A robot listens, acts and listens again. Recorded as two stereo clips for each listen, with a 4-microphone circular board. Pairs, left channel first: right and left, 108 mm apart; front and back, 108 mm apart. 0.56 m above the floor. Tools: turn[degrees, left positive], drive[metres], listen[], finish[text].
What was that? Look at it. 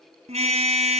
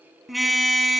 Thought: The car horn: 90° left.
Action: turn[90]
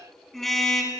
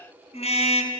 Action: finish[Facing the car horn.]